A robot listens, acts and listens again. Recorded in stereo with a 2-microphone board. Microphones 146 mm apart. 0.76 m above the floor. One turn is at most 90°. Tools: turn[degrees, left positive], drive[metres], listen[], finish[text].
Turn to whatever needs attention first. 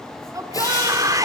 Thought: The shout: about 20° right or 160° right.
Action: turn[-20]
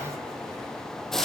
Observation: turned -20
Action: listen[]
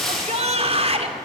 Thought: So it is at 135° right.
Action: turn[-90]
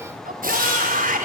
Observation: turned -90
Thought: The shout is now 70° right.
Action: turn[-70]
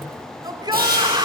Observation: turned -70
Thought: The shout is now 30° right.
Action: turn[-30]
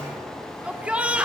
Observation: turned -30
Thought: The shout is now 10° right.
Action: turn[-10]
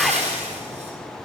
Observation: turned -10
Action: finish[Facing the shout, 2 to 4 m away.]